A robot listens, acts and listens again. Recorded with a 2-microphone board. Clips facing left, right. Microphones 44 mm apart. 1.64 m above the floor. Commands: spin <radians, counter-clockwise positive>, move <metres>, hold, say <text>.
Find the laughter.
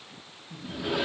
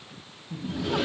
spin -0.44
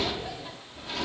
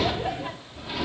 spin -2.27
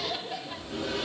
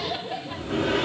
spin -0.35
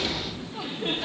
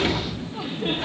say Found it: laughter, straight ahead, under 1 m away.